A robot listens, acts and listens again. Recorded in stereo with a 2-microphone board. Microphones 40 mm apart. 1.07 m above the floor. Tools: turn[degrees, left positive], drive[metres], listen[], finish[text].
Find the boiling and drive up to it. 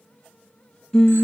Action: listen[]
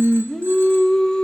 Action: listen[]
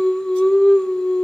Action: finish[I can't make out boiling, only singing.]